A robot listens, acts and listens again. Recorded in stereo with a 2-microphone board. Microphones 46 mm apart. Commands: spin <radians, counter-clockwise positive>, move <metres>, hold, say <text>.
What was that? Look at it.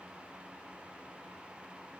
hold
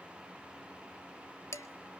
spin 1.57
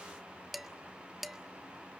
say Facing the dishes clattering, 1 to 2 m away.